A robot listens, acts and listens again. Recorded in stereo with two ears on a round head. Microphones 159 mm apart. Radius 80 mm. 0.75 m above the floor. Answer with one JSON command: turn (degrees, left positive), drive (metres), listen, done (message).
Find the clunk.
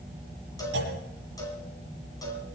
{"turn": -65}
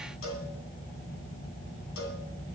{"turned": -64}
{"listen": true}
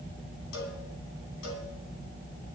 {"done": "I heard a clunk, but can't make it out now. It was about straight ahead or 55° right."}